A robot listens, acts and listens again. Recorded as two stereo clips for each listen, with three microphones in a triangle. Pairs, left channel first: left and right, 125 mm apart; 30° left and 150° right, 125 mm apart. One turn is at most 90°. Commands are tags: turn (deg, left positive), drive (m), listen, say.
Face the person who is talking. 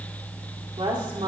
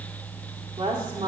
<turn deg="-90"/>
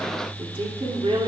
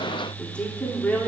<turn deg="-50"/>
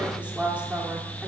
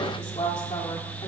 <turn deg="-10"/>
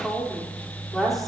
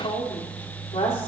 <say>Found it: a woman speaking, straight ahead.</say>